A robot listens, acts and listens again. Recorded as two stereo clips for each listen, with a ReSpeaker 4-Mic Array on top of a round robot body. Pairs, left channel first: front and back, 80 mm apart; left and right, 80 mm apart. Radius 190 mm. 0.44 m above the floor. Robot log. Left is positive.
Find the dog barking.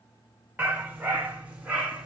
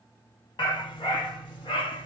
note: The dog barking: 100° left.
cmd yaw +100
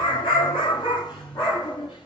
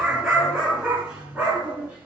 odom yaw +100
note: The dog barking is now 20° right.
cmd yaw -20
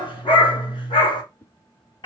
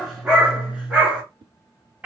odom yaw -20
note: The dog barking is now 15° right.
cmd yaw -15
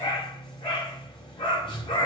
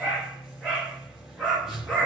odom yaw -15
note: The dog barking is now 10° right.
cmd yaw -10
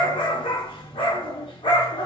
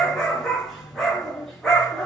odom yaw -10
end: Found it: a dog barking, straight ahead.